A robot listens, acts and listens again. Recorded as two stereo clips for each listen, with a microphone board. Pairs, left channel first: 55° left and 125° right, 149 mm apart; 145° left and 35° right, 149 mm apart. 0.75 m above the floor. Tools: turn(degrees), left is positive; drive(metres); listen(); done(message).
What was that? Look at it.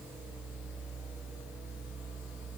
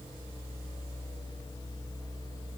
listen()
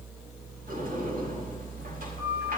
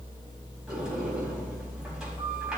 turn(degrees=-120)
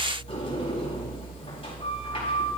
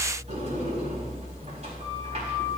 done("Facing the sliding door.")